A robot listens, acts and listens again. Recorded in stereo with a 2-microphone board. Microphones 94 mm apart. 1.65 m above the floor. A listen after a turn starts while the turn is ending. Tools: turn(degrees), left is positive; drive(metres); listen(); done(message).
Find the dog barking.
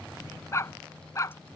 turn(degrees=35)
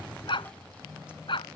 turn(degrees=110)
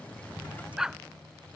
done("Found it: a dog barking, straight ahead.")